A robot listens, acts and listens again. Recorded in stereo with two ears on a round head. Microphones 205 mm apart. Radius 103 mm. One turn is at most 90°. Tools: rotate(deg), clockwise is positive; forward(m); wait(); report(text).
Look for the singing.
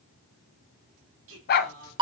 rotate(70)
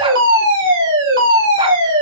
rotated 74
wait()
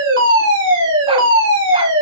wait()
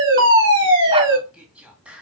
report("Facing the singing.")